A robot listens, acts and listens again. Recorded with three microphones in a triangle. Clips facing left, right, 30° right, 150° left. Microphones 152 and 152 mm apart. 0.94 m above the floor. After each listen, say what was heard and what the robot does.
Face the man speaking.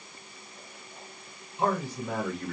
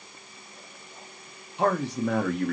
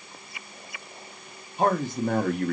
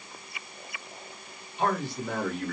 The man speaking: 70° right. Turn 70° right.
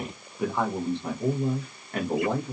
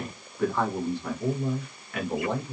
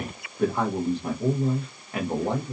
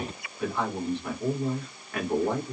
The man speaking is now 40° left. Turn 40° left.
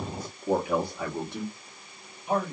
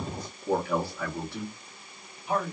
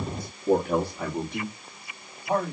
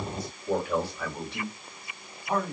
The man speaking is now 25° left. Turn 25° left.
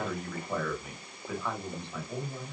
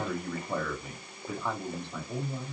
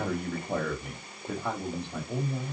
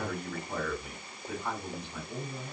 The man speaking is now 10° right. Turn 10° right.
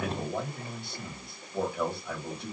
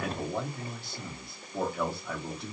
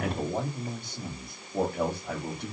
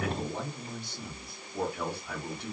Found it: a man speaking, straight ahead, 1 to 2 m away.